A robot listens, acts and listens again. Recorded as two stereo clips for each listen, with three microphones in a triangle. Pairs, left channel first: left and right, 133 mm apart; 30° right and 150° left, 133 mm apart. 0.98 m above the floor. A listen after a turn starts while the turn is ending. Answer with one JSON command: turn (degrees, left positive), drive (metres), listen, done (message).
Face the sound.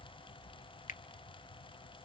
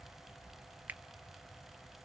{"listen": true}
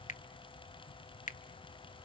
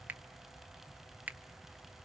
{"turn": 70}
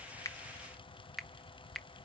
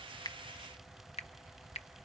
{"done": "Found it: a finger snap, straight ahead."}